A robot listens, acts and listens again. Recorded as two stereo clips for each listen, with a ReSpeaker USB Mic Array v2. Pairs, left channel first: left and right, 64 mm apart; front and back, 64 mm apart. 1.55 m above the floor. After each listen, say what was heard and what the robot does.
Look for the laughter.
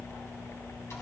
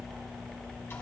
Keep listening.
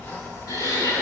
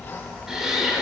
The laughter: 95° left. Turn 95° left.
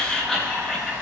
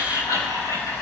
Facing the laughter, over 4 m away.